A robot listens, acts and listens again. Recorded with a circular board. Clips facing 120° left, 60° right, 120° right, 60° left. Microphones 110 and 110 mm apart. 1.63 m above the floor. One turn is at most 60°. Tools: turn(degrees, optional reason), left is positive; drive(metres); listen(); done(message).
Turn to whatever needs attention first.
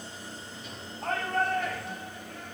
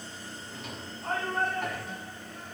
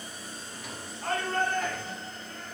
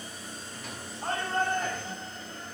turn(degrees=60, reason="The shout: 125° left.")
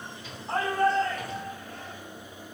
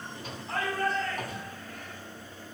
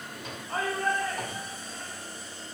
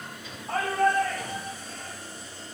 turn(degrees=60, reason="The shout is now 65° left.")
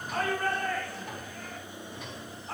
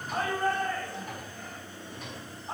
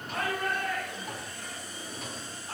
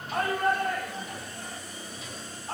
turn(degrees=15, reason="The shout is now 15° left.")
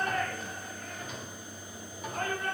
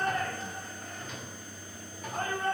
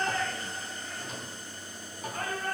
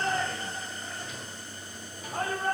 done("Found it: a shout, straight ahead.")